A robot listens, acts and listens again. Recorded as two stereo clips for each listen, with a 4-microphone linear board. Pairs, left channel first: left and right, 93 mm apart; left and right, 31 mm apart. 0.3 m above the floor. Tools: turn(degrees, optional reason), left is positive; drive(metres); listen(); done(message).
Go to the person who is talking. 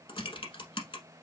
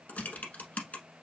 listen()
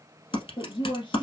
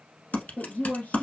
turn(degrees=65, reason="The woman speaking: about 65° left or 115° left.")
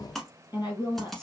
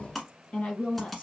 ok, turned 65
turn(degrees=45, reason="So it is at 45° left.")
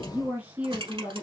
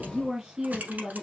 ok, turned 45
turn(degrees=-20, reason="The woman speaking is now 20° right.")
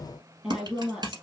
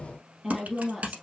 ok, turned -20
turn(degrees=-10, reason="The woman speaking is now 10° right.")
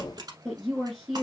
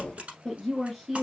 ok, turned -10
drive(metres=1.0)
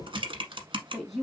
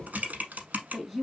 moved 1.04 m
drive(metres=1.0)
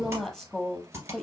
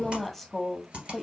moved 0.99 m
drive(metres=1.0)
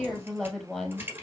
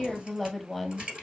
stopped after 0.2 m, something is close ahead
done("Arrived at the woman speaking, straight ahead.")